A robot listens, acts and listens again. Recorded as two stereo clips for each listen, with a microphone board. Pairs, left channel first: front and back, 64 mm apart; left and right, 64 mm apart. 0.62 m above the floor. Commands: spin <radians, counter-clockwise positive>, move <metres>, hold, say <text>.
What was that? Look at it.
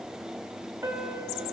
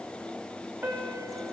spin -2.44
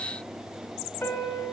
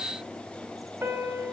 spin -0.70
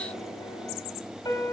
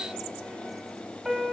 say Found it: a piano, straight ahead.